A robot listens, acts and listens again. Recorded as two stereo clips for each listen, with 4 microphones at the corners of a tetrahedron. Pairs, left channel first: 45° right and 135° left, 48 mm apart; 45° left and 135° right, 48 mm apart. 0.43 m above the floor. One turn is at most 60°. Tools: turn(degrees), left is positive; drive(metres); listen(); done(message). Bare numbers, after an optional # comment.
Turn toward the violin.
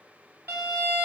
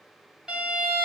# The violin: 155° left.
turn(60)
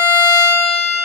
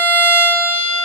# The violin is now 100° left.
turn(60)
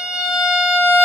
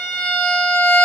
# The violin is now 45° left.
turn(45)
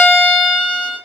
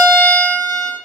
done("Facing the violin, 1 to 2 m away.")